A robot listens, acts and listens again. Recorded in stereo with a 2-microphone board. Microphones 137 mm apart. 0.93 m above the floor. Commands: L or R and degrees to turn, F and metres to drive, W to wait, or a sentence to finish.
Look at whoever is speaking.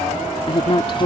L40
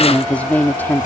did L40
L15
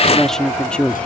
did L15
L10
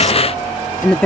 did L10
L10
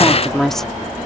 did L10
Facing the woman speaking.